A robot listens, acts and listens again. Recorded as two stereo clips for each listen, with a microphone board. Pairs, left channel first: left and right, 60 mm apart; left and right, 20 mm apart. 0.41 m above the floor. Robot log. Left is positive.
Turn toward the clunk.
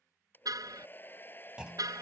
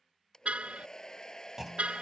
note: The clunk: about 15° right or 165° right.
cmd yaw -15
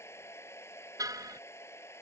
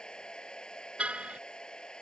cmd idle
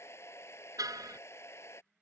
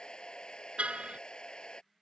end: I heard a clunk, but can't make it out now. It was about straight ahead or 150° right.